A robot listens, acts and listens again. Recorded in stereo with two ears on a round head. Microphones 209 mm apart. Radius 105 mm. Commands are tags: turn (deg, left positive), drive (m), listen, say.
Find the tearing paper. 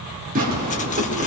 <turn deg="-40"/>
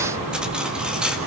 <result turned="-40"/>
<listen/>
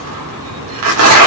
<turn deg="-100"/>
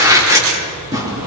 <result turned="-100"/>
<turn deg="-15"/>
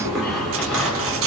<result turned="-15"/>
<say>Found it: tearing paper, straight ahead, over 4 m away.</say>